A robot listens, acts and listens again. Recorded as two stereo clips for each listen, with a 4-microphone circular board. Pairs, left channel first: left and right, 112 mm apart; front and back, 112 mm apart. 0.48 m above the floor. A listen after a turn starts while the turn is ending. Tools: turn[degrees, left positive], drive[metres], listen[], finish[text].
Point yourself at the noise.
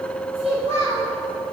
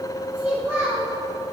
Thought: The child speaking: 105° right.
Action: turn[-105]
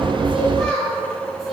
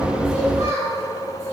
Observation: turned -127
Action: finish[Facing the child speaking, 2 to 4 m away.]